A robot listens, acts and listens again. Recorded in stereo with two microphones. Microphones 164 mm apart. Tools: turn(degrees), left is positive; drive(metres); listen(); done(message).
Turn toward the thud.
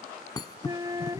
turn(degrees=25)
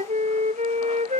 listen()
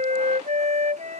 done("I heard a thud, but can't make it out now. It was about straight ahead or 130° left.")